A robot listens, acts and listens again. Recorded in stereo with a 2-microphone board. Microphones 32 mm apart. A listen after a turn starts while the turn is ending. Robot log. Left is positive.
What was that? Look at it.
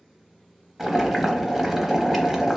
cmd yaw -30
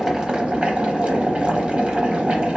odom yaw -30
note: So it is at 135° right.
cmd yaw -135
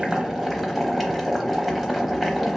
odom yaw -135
end: Facing the boiling, under 1 m away.